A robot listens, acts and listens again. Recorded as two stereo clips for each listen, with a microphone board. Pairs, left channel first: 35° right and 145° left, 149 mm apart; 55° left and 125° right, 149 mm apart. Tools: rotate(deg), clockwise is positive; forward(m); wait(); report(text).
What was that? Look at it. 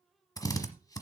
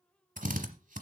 rotate(100)
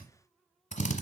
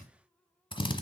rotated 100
report("Found it: a drill, straight ahead, 1 to 2 m away.")